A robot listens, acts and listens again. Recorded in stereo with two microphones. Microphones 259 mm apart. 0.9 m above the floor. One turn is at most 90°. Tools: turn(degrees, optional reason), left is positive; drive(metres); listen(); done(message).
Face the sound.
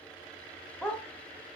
turn(degrees=30)
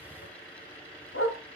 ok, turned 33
turn(degrees=90, reason="So it is at 120° left.")
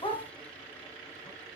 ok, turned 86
turn(degrees=20, reason="The dog barking is now 20° left.")
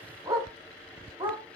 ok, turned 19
turn(degrees=-20, reason="The dog barking is now 20° right.")
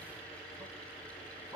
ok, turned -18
done("Found it: a dog barking, straight ahead, 2 to 4 m away.")